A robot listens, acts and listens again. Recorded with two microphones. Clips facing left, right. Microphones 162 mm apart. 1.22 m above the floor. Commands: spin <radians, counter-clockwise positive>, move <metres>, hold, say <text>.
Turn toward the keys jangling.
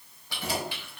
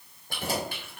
spin -0.79
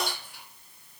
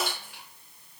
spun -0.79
spin -1.75
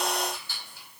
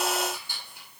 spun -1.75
spin -0.26
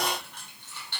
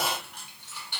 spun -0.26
spin -0.26
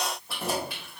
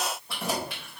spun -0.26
say Facing the keys jangling.